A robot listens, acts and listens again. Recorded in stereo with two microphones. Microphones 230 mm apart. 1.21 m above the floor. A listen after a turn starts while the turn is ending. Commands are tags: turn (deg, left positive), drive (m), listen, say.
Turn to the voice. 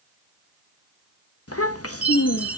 <turn deg="70"/>
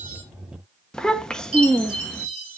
<say>Facing the child speaking.</say>